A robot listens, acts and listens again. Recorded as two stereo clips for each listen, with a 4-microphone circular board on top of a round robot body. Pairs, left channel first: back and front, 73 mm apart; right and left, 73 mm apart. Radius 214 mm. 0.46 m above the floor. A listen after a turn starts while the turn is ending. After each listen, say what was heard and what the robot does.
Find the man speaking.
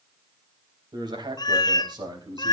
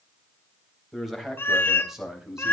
The man speaking: 10° left. Turn 10° left.
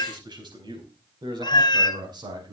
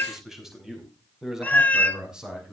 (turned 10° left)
The man speaking is now 10° left. Turn 10° left.
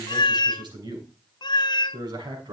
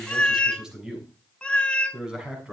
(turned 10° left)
The man speaking is now 10° left. Turn 10° left.
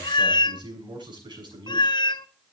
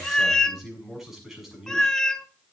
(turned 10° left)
Facing the man speaking.